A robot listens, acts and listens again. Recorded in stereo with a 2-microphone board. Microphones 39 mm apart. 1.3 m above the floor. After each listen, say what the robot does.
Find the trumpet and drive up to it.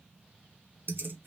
Keep listening.
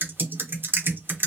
Keep listening.
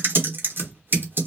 I can't make out a trumpet to turn to.